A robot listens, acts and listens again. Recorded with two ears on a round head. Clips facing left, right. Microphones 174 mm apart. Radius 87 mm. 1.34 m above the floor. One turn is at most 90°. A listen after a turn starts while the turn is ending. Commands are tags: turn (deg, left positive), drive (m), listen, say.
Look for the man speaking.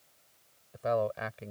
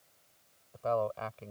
<turn deg="20"/>
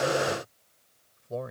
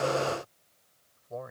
<turn deg="90"/>
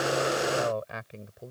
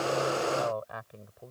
<turn deg="30"/>
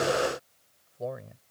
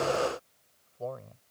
<turn deg="20"/>
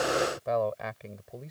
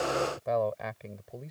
<say>Found it: a man speaking, straight ahead.</say>